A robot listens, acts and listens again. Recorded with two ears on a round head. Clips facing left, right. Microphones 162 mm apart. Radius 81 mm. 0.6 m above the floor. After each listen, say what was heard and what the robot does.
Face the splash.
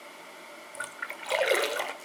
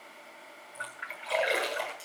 The splash: about 60° left or 120° left. Turn 60° left.
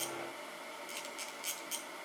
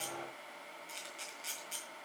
Keep listening.
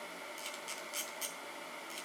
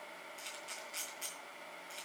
I heard a splash, but can't make it out now. It was about straight ahead or 60° left.